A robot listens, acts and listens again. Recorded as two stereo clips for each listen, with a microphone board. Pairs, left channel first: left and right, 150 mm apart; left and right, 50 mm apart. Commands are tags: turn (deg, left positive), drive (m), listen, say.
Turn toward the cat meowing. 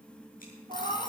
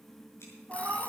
<turn deg="-45"/>
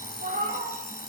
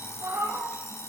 <turn deg="-105"/>
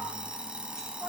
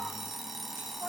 <turn deg="-10"/>
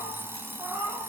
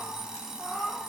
<turn deg="-15"/>
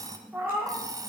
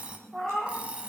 <turn deg="-15"/>
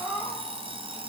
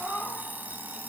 <say>Facing the cat meowing.</say>